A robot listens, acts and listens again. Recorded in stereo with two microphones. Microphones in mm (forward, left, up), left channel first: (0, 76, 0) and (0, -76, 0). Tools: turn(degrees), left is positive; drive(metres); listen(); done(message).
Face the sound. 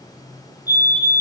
turn(degrees=-30)
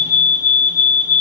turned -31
turn(degrees=20)
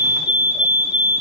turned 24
done("Found it: a fire alarm, straight ahead, over 4 m away.")